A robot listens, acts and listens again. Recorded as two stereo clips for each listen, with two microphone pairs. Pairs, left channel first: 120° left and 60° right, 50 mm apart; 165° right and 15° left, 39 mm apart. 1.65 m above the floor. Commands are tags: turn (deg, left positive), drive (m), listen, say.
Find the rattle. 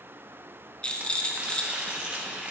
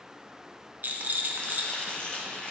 <turn deg="55"/>
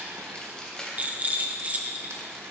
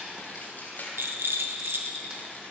<say>Facing the rattle, 1 to 2 m away.</say>